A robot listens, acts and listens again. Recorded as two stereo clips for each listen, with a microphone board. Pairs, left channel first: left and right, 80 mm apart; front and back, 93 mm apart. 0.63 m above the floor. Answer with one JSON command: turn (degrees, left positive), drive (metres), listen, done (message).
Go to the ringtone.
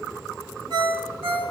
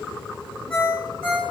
{"turn": -80}
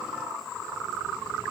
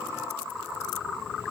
{"listen": true}
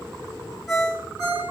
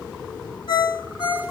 {"drive": 1.0}
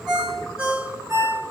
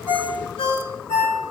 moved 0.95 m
{"turn": -10}
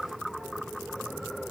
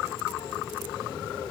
{"listen": true}
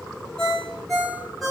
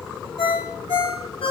{"drive": 1.0}
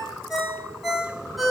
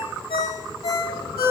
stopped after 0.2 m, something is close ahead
{"done": "Arrived at the ringtone, straight ahead."}